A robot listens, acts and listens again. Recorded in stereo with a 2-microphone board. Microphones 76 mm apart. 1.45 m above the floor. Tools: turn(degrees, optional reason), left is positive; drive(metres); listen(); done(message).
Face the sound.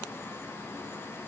listen()
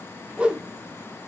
turn(degrees=-30)
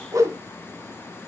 turn(degrees=-135, reason="So it is at 135° right.")
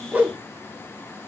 turn(degrees=-25, reason="The whoosh is now 25° right.")
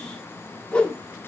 turn(degrees=15, reason="The whoosh is now 15° left.")
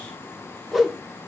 done("Facing the whoosh.")